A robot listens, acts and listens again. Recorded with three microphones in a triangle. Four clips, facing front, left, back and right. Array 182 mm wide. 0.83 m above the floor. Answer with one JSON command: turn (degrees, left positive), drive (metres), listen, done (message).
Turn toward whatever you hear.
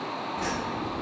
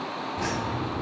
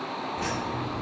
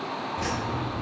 {"turn": 110}
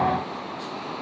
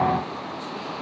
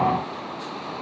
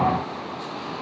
{"listen": true}
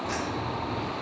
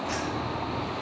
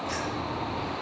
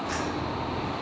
{"done": "Found it: keys jangling, straight ahead."}